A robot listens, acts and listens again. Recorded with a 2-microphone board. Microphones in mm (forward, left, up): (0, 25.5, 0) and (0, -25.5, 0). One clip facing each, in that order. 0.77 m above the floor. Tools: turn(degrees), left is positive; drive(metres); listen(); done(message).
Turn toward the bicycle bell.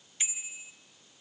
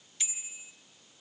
turn(degrees=25)
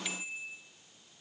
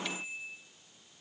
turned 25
done("Facing the bicycle bell, 2 to 4 m away.")